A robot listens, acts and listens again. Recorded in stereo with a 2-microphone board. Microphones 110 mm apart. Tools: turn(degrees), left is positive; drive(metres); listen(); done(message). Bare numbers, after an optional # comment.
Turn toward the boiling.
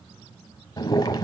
# The boiling: about 40° left or 140° left.
turn(40)
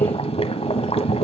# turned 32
# So it is at 105° left.
turn(105)
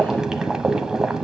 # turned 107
done("Found it: boiling, straight ahead, 1 to 2 m away.")